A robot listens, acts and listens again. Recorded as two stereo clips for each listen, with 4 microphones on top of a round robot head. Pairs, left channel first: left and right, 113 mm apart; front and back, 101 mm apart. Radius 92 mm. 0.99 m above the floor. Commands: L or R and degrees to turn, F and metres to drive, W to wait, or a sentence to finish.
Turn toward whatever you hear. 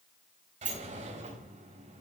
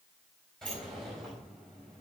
R85
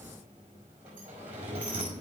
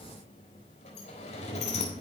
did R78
R10
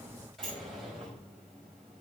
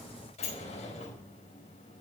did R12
Facing the sliding door.